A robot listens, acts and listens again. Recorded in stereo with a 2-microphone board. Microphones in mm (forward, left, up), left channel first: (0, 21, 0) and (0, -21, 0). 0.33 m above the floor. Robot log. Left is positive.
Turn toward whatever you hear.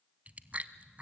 note: The chewing: about 35° right or 145° right.
cmd yaw -35
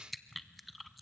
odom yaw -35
end: Facing the chewing, under 1 m away.